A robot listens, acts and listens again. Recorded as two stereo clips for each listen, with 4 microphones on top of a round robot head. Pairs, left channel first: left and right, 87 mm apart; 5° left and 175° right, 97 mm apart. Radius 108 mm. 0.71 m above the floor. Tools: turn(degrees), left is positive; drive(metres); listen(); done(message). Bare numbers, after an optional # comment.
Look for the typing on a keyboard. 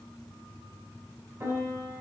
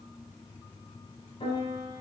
listen()
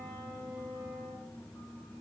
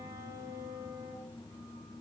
listen()
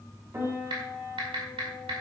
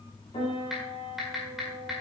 # The typing on a keyboard: 90° right.
turn(-90)
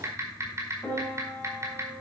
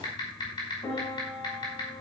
# The typing on a keyboard is now 35° right.
turn(-35)
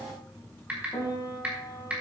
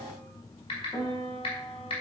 # The typing on a keyboard is now 15° right.
turn(-15)
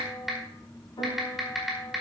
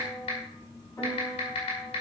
done("Facing the typing on a keyboard, over 4 m away.")